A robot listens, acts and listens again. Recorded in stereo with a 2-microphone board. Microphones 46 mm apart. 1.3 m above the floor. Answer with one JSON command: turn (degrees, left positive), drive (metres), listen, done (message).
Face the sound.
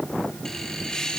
{"turn": 20}
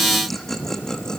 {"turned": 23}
{"turn": 30}
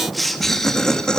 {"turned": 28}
{"turn": 20}
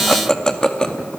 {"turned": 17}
{"turn": 20}
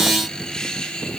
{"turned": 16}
{"turn": 20}
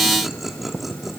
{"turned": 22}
{"done": "Facing the laughter."}